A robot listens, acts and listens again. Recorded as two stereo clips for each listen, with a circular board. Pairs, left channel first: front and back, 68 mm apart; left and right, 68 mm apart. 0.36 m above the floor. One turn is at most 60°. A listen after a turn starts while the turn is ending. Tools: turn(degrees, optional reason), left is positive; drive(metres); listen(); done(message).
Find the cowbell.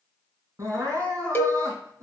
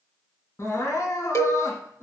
turn(degrees=55, reason="The cowbell: 55° left.")
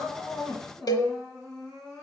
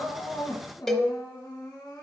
done("Facing the cowbell, 1 to 2 m away.")